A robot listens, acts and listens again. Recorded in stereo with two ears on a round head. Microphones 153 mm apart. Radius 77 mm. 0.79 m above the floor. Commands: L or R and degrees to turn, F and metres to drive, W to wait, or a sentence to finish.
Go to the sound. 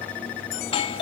L35
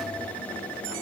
W
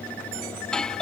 F1.0
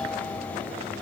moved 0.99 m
W
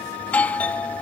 L15
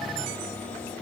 W
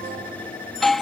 F1.0
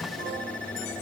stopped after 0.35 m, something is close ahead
W
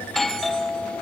I am next to the doorbell.